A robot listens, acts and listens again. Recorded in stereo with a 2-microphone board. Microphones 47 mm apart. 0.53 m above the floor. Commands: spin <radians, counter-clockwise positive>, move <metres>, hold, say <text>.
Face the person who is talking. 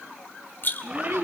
spin -1.57
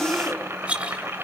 hold
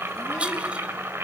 hold
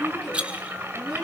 say Facing the child speaking, 2 to 4 m away.